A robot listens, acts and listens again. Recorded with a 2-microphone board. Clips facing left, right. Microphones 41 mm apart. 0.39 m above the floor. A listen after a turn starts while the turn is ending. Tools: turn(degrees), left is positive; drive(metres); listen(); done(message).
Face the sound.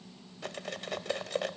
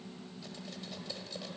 turn(degrees=65)
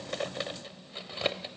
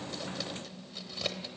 turn(degrees=35)
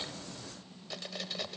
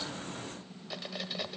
done("Found it: cutlery clinking, straight ahead.")